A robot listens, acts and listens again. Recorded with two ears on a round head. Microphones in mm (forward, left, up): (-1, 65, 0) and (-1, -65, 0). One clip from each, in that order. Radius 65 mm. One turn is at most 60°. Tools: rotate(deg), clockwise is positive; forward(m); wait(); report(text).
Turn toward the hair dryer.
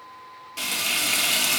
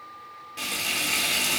wait()
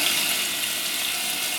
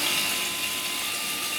wait()
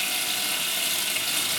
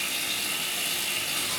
report("I can't make out a hair dryer to turn to.")